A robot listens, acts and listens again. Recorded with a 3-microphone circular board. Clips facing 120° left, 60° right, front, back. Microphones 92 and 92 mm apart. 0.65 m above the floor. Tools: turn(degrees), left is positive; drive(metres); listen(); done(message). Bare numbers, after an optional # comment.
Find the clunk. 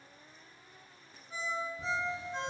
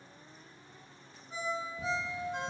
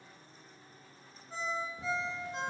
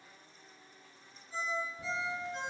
listen()
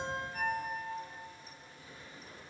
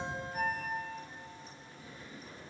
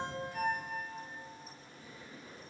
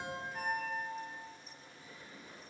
listen()
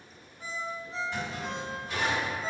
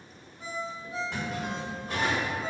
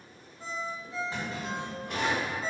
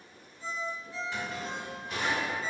# The clunk: 50° right.
turn(-50)
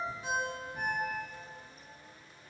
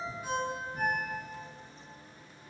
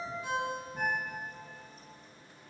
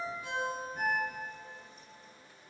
done("I heard a clunk from this way, but can't make it out now.")